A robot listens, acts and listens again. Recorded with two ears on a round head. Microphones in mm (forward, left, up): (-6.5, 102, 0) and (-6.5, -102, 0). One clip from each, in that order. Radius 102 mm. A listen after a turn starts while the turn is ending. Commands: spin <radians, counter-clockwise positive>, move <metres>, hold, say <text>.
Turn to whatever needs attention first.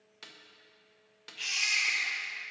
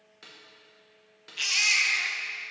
spin -0.61
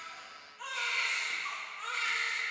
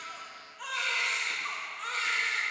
say Found it: a baby crying, straight ahead, under 1 m away.